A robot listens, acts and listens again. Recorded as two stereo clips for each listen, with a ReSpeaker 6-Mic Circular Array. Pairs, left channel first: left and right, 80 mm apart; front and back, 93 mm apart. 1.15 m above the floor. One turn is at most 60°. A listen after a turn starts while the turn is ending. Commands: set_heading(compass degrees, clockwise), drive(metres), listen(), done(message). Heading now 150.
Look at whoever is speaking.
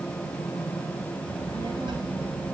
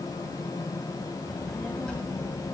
set_heading(210)
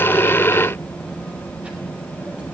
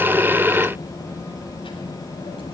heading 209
set_heading(224)
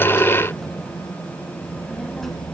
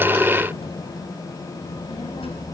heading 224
done("Facing the child speaking, over 4 m away.")